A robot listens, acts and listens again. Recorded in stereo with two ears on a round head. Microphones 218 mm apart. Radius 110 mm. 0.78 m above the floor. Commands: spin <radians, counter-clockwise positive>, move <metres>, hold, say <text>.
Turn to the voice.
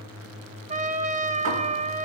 hold
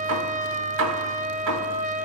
hold
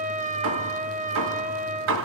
say I can't make out anyone speaking, only a trumpet and hammering.